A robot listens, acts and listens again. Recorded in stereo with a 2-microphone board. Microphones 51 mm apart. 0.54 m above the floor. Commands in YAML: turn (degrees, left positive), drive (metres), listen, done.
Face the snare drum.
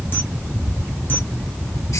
listen: true
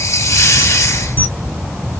listen: true
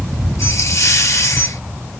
done: "I can't make out a snare drum, only a camera shutter and a hiss."